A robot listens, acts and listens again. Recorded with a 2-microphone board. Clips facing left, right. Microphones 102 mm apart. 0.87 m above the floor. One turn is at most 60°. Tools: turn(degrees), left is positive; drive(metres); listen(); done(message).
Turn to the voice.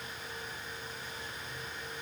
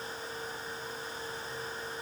listen()
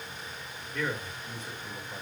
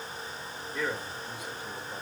turn(degrees=-30)
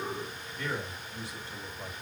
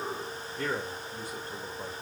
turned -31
turn(degrees=-60)
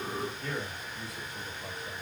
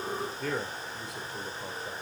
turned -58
turn(degrees=-60)
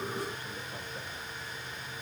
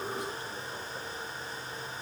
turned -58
turn(degrees=-20)
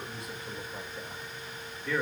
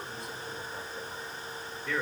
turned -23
done("Found it: a man speaking, straight ahead.")